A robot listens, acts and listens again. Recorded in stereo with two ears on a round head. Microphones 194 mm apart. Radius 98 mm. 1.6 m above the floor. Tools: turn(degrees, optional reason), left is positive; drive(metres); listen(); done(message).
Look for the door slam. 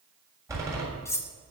turn(degrees=-15, reason="The door slam: about 15° right or 165° right.")
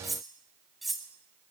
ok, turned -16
listen()
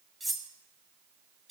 done("I heard a door slam, but can't make it out now. It was about straight ahead or 150° right.")